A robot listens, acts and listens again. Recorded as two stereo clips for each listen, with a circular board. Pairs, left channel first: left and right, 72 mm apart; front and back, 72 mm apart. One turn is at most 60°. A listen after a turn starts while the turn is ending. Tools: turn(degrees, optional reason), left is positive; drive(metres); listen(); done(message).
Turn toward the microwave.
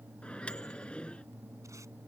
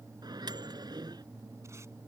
turn(degrees=60, reason="The microwave: 165° left.")
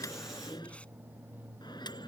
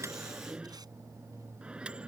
turn(degrees=60, reason="The microwave is now 105° left.")
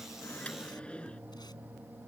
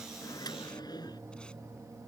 turn(degrees=15, reason="The microwave is now 15° left.")
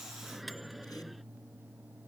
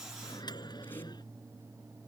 done("Found it: a microwave, straight ahead.")